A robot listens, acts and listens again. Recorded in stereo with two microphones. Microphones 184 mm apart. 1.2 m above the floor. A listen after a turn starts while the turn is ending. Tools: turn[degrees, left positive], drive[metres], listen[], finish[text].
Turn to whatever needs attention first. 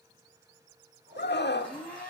Thought: The scream: about 65° left or 115° left.
Action: turn[65]
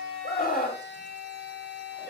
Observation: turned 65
Thought: So it is at 50° left.
Action: turn[50]
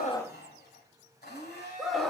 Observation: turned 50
Action: finish[Found it: a scream, straight ahead, 1 to 2 m away.]